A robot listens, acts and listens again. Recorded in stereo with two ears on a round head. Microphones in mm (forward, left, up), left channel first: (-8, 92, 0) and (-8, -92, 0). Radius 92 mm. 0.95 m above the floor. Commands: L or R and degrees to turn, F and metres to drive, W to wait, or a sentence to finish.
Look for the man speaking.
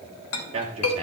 R30
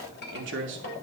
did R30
R115
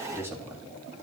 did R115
R10
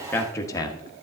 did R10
L20
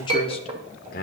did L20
L45
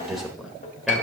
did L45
Found it: a man speaking, straight ahead.